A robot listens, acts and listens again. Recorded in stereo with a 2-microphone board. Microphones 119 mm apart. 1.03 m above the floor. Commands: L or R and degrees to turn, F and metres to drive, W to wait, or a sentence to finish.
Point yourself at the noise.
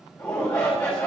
L25
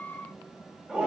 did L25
Facing the shout.